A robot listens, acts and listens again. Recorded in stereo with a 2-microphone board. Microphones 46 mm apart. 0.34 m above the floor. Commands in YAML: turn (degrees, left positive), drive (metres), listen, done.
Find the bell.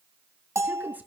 turn: -70
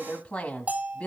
turn: -35
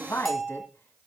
done: "Found it: a bell, straight ahead, 1 to 2 m away."